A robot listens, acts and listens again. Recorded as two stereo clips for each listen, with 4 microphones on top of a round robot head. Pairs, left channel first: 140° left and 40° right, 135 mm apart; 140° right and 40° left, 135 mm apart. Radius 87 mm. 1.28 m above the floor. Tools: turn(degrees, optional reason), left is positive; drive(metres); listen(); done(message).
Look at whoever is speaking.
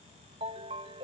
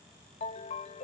listen()
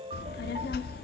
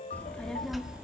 turn(degrees=125, reason="The child speaking: 125° left.")
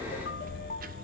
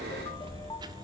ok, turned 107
turn(degrees=-20, reason="The child speaking is now 20° right.")
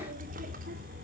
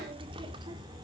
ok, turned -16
turn(degrees=-20, reason="The child speaking is now 20° right.")
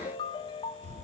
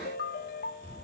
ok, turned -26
done("Facing the child speaking.")